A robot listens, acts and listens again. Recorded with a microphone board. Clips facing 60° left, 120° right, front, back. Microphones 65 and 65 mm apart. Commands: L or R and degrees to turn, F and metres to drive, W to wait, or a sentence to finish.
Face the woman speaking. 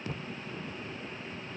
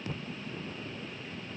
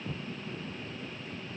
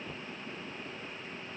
W
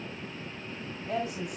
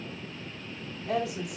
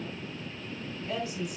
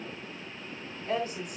R135
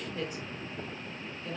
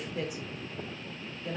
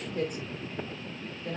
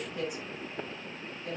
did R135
R50
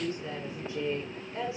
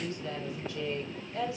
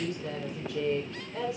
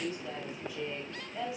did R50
Found it: a woman speaking, straight ahead.